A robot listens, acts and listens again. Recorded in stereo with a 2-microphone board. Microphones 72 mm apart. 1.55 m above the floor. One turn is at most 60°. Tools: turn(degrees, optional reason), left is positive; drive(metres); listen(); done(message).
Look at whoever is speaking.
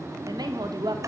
turn(degrees=-60, reason="The woman speaking: about 75° right or 105° right.")
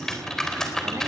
listen()
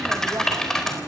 listen()
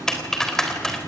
done("I heard a woman speaking, but can't make it out now. It was about 15° right or 45° right.")